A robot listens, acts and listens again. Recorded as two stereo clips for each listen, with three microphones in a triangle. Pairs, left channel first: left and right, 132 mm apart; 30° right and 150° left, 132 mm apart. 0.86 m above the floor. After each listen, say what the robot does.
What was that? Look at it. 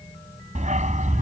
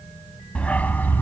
Turn 105° right.
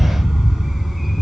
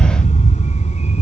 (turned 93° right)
Found it: a dog barking, straight ahead.